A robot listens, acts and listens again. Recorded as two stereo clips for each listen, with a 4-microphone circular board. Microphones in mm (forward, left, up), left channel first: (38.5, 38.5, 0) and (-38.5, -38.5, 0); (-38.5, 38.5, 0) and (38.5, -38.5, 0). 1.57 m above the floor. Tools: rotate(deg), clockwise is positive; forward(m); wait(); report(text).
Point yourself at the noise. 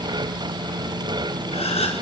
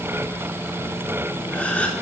rotate(-55)
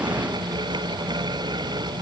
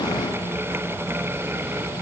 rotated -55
report("Facing where the gasp came from. I can't hear it now.")